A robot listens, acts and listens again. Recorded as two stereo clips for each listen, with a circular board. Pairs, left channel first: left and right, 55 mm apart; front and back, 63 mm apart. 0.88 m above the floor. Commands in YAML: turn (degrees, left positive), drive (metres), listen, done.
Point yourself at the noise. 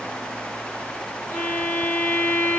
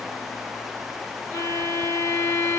turn: 50
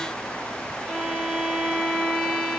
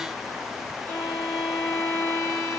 turn: -10
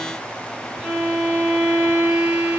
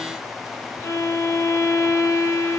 done: "Found it: a violin, straight ahead."